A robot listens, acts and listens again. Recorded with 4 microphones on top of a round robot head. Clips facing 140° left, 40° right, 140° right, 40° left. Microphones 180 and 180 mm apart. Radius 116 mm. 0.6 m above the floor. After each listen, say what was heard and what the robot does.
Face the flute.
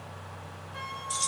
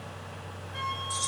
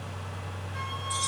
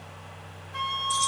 The flute: 45° left. Turn 45° left.
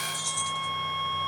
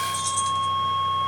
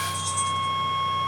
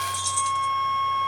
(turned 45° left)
Found it: a flute, straight ahead, 1 to 2 m away.